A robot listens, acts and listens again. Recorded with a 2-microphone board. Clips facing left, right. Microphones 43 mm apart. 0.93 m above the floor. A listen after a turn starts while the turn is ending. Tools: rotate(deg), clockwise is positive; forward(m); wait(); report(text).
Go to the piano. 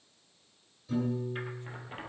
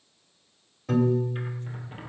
rotate(65)
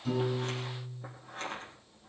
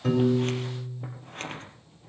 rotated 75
rotate(40)
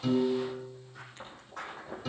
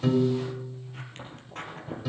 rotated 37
forward(1.0)
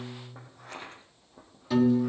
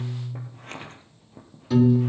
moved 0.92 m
forward(1.0)
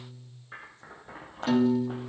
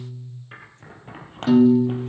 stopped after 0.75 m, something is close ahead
report("Arrived at the piano, straight ahead.")